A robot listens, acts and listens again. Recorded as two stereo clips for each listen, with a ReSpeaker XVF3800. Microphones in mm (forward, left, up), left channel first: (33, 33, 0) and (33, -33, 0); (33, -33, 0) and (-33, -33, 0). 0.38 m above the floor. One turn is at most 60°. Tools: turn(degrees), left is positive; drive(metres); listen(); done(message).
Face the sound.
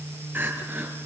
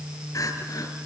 turn(degrees=-30)
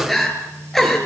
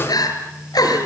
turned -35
done("Found it: crying, straight ahead.")